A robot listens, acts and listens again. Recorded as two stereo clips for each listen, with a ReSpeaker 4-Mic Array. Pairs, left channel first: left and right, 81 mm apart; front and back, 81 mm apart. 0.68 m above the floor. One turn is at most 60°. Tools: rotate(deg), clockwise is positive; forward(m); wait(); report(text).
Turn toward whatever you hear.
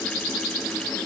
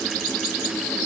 wait()
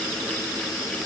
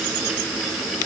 wait()
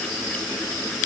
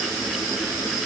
report("I can't make out anything.")